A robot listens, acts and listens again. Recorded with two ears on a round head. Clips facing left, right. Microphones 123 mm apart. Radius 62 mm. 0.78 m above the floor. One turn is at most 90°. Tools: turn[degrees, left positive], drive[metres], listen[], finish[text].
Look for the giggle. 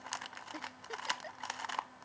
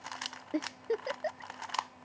Thought: The giggle: about 60° right or 120° right.
Action: turn[-60]
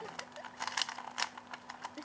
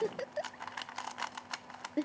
Thought: So it is at 60° right.
Action: turn[-60]
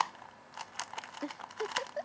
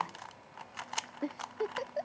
Thought: The giggle is now 15° right.
Action: turn[-15]
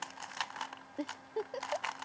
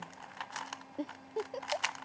Action: finish[Found it: a giggle, straight ahead.]